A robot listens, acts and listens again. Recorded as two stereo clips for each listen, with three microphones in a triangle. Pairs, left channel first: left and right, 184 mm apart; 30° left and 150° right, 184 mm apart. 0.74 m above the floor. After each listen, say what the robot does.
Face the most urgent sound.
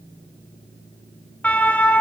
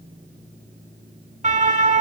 Turn 170° left.
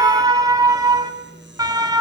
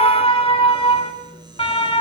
Turn 25° right.
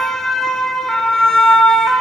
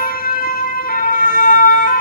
Found it: a siren, straight ahead, 2 to 4 m away.